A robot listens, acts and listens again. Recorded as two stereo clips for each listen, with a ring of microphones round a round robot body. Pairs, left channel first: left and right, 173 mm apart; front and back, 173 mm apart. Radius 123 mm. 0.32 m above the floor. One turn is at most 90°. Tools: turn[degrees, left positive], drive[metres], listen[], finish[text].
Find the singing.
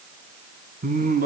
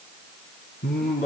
Thought: The singing: 60° right.
Action: turn[-60]
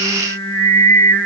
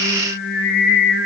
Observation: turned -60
Thought: The singing is now 10° left.
Action: turn[10]
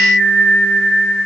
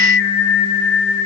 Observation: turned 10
Action: finish[Found it: singing, straight ahead, over 4 m away.]